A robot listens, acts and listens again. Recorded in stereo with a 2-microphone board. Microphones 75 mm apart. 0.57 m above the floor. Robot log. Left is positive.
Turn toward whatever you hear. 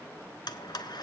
note: The blender: about 70° left or 110° left.
cmd yaw +70
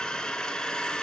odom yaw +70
note: So it is at 10° left.
cmd yaw +10
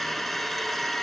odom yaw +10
end: Found it: a blender, straight ahead, 1 to 2 m away.